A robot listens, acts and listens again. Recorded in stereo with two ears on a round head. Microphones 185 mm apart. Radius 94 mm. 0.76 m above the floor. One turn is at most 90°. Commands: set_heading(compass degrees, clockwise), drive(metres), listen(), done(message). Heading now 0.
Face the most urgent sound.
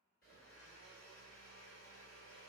listen()
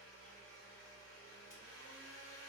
listen()
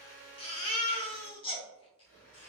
set_heading(335)
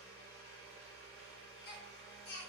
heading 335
set_heading(245)
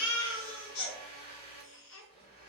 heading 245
set_heading(180)
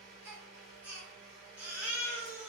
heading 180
set_heading(190)
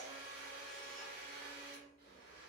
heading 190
listen()
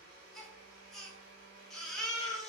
done("Found it: a baby crying, straight ahead.")